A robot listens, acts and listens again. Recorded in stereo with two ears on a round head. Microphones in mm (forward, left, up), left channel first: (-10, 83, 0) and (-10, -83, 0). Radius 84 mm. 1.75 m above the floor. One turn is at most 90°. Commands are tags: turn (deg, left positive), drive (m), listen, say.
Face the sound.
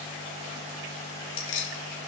<turn deg="90"/>
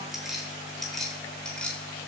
<say>Found it: keys jangling, straight ahead, over 4 m away.</say>